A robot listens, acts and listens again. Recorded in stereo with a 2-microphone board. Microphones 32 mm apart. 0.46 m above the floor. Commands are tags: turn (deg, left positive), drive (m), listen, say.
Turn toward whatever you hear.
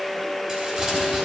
<turn deg="-30"/>
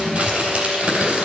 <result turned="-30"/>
<turn deg="-120"/>
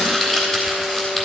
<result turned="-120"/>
<turn deg="20"/>
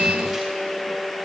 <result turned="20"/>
<listen/>
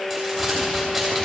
<say>Facing the crumpling, 2 to 4 m away.</say>